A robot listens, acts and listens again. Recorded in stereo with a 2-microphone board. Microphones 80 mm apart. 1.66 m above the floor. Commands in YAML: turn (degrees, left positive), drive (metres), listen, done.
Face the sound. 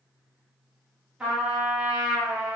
turn: -30
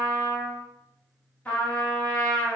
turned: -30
turn: 20
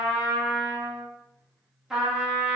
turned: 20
done: "Found it: a trumpet, straight ahead, 1 to 2 m away."